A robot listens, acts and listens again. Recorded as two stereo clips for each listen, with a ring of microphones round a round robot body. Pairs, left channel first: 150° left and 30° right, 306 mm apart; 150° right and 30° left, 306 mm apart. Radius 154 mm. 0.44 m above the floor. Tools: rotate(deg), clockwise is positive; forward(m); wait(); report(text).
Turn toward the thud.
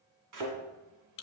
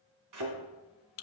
report("Found it: a thud, straight ahead, 1 to 2 m away.")